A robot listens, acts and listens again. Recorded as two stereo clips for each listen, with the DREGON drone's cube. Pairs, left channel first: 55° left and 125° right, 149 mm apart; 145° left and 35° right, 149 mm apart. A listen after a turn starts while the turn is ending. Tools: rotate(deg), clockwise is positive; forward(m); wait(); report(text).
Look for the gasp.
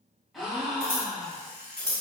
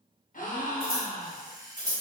rotate(-145)
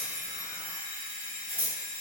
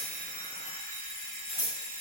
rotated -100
rotate(-45)
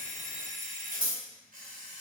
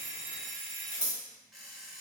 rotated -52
report("I heard a gasp from this way, but can't make it out now.")